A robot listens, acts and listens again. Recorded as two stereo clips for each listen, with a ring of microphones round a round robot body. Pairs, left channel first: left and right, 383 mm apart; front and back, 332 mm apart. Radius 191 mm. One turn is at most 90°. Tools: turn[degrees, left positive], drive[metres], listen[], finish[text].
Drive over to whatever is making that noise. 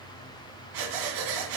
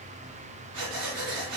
Thought: The breathing: 125° right.
Action: turn[-90]
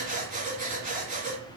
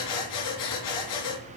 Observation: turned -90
Thought: The breathing is now 20° right.
Action: turn[-20]
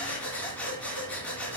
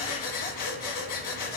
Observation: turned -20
Action: drive[1.0]
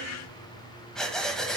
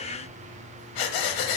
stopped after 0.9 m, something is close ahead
Action: finish[Arrived at the breathing, straight ahead.]